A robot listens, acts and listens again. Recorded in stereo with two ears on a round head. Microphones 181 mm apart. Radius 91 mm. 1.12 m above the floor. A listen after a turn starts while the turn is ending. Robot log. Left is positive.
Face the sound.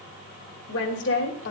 note: The woman speaking: about 60° left or 120° left.
cmd yaw +60
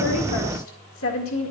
note: So it is at 75° left.
cmd yaw +75
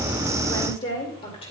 note: The woman speaking is now 30° left.
cmd yaw +30
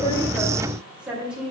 end: Facing the woman speaking, 2 to 4 m away.